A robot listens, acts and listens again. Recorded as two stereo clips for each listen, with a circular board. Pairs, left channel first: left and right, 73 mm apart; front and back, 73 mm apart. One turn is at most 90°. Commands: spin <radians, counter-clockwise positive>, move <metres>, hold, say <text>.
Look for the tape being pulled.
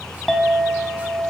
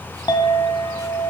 hold
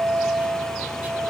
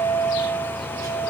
hold
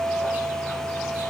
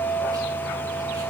say I can't make out tape being pulled, only a clink.